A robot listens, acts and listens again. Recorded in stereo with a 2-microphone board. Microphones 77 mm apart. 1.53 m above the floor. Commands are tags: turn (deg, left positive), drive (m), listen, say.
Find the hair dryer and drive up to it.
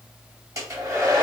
<turn deg="-45"/>
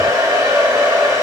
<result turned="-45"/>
<turn deg="-85"/>
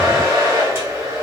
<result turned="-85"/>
<turn deg="-30"/>
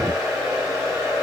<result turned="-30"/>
<drive m="1.0"/>
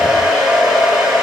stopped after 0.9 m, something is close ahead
<say>Arrived at the hair dryer, straight ahead.</say>